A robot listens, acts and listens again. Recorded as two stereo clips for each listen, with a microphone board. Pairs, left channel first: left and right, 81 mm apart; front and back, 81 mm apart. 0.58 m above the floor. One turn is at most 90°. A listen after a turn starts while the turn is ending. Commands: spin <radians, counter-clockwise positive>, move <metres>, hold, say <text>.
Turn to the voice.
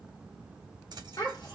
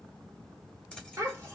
spin 1.57
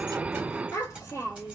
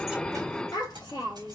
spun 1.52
spin 0.70
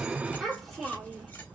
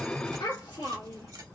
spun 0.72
say Facing the child speaking, 1 to 2 m away.